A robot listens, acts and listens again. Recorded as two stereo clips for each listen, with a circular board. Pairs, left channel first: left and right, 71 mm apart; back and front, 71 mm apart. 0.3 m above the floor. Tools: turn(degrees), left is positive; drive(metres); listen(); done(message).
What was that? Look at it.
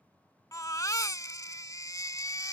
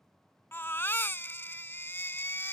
turn(degrees=125)
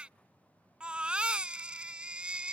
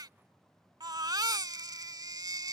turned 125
turn(degrees=-15)
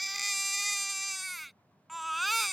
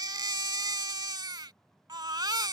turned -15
done("Found it: a baby crying, straight ahead.")